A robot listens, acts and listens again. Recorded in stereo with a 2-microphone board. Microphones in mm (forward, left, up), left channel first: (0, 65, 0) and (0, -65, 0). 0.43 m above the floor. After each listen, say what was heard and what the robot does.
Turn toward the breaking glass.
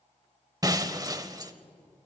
The breaking glass: about 30° right or 150° right. Turn 30° right.
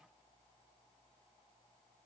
Keep listening.
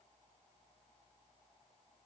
I heard breaking glass, but can't make it out now. It was about straight ahead or 120° right.